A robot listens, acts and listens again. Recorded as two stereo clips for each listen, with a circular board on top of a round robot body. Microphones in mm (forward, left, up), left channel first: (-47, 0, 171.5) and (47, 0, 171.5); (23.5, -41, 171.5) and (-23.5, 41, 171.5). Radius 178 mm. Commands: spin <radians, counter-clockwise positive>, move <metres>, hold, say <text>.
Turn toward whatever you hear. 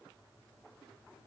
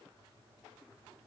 hold
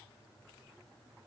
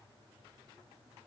hold
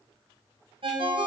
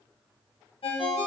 spin -0.52
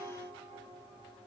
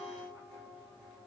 say Found it: a ringtone, straight ahead, 1 to 2 m away.